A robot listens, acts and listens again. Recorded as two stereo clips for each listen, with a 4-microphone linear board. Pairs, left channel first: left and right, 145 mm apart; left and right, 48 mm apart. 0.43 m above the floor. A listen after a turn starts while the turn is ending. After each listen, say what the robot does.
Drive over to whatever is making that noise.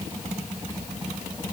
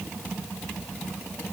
Keep listening.
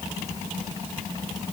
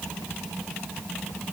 Keep listening.
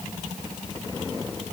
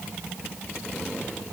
I can't make out anything to turn to.